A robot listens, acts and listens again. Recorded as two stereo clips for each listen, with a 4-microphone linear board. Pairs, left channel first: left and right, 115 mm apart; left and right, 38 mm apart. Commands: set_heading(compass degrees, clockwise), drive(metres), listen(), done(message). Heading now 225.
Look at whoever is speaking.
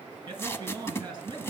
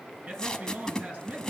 set_heading(265)
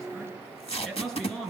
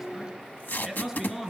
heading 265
done("Facing the man speaking, over 4 m away.")